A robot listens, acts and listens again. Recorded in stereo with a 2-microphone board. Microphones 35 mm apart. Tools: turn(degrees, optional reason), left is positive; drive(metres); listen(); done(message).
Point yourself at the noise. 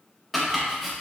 turn(degrees=30)
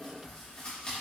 turn(degrees=150, reason="So it is at 150° left.")
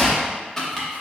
turn(degrees=10, reason="The chopping is now 10° left.")
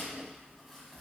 listen()
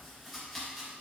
done("Facing the chopping.")